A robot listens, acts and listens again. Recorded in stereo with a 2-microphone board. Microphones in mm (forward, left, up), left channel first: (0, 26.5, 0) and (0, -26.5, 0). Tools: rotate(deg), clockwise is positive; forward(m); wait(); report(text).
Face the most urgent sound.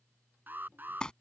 rotate(35)
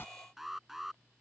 report("Facing the alarm.")